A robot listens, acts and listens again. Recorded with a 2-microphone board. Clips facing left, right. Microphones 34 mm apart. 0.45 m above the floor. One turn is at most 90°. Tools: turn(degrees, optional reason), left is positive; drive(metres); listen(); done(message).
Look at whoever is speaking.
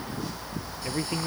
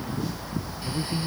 turn(degrees=35, reason="The man speaking: about 35° left or 145° left.")
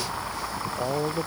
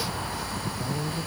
turn(degrees=90, reason="So it is at 110° left.")
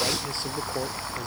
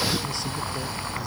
turn(degrees=20, reason="Nothing new. It was at 20° left.")
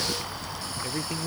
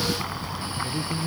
turn(degrees=20, reason="The man speaking is now 20° left.")
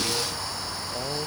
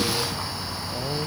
done("Facing the man speaking.")